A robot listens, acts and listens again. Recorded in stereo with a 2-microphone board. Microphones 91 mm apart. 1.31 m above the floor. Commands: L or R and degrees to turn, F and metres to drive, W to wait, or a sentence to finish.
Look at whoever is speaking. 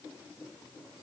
W
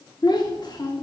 L50
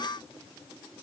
W
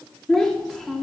Facing the child speaking, 1 to 2 m away.